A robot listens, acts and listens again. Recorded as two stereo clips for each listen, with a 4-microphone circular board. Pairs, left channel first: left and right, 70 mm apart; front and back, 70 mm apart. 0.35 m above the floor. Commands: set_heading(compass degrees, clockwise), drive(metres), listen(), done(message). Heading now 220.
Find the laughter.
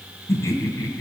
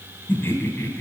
set_heading(170)
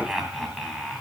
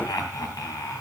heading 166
done("Found it: laughter, straight ahead.")